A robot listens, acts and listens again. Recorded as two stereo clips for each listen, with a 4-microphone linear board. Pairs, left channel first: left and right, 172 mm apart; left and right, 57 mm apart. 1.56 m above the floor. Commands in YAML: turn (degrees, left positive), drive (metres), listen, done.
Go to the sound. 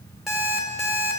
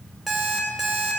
turn: 30
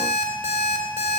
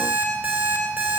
turn: -30
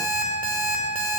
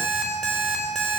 drive: 1.0
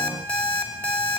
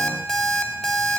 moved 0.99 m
turn: 10
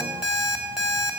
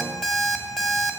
drive: 1.0
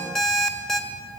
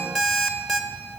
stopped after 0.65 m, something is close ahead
done: "I am next to the alarm clock."